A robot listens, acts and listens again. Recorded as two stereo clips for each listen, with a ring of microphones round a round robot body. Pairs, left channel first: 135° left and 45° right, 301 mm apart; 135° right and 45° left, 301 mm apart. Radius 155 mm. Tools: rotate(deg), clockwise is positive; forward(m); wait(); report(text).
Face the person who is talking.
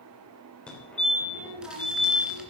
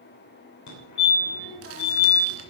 rotate(80)
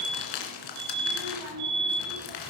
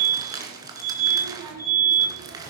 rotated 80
report("Found it: a child speaking, straight ahead, over 4 m away.")